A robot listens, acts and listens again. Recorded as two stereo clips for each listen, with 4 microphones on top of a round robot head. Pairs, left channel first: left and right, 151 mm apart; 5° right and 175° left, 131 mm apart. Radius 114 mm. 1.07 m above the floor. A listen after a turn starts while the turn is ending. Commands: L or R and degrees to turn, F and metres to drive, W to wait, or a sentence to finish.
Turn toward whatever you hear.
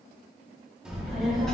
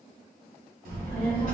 L175
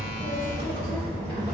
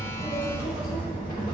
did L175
R35
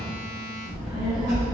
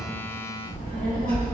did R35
Found it: a child speaking, straight ahead.